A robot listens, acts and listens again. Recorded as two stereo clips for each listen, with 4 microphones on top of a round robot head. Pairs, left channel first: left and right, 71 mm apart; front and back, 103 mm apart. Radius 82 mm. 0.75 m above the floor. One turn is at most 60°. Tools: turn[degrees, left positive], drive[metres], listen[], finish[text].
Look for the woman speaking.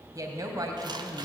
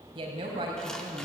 Thought: The woman speaking: 125° right.
Action: turn[-60]
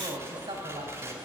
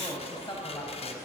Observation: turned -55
Thought: The woman speaking is now 60° right.
Action: turn[-60]
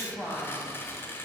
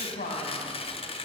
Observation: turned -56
Action: finish[Found it: a woman speaking, straight ahead.]